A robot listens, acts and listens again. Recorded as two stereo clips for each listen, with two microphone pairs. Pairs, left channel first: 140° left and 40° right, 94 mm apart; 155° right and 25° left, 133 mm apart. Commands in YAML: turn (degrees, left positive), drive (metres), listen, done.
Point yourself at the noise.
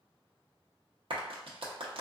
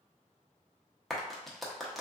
turn: -65
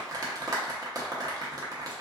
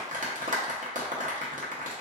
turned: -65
turn: 10
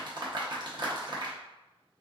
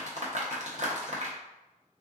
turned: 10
done: "Found it: a clap, straight ahead, under 1 m away."